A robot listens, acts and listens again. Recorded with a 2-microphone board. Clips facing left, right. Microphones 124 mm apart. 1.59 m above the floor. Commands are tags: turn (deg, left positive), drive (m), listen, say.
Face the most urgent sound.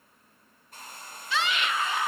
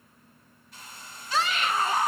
<turn deg="-40"/>
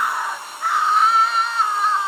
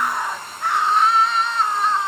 <say>Found it: a scream, straight ahead.</say>